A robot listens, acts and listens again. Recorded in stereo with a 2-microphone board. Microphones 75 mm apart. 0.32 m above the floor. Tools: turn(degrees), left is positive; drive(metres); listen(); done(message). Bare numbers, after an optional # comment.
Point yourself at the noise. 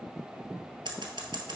turn(-90)
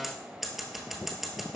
done("Facing the scissors, 1 to 2 m away.")